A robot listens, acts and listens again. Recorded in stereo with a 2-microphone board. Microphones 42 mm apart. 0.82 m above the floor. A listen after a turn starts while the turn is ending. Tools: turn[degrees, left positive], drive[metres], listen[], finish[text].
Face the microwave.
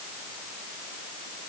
Action: listen[]
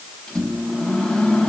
Action: turn[30]
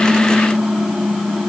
Thought: So it is at 20° right.
Action: turn[-20]
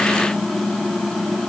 Action: finish[Facing the microwave.]